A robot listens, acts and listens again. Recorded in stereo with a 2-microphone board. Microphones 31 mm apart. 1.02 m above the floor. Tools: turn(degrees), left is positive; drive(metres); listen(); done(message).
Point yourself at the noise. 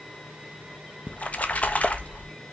turn(degrees=50)
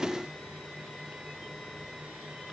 listen()
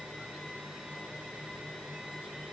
done("I heard a splash, but can't make it out now. It was about straight ahead or 80° left.")